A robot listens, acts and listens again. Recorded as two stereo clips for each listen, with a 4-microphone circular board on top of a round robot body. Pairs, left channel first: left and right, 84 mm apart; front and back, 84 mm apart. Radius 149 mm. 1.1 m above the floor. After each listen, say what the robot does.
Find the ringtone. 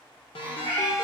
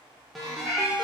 Turn 90° left.
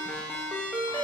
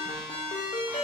Turn 15° left.
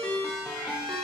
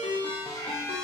Found it: a ringtone, straight ahead, under 1 m away.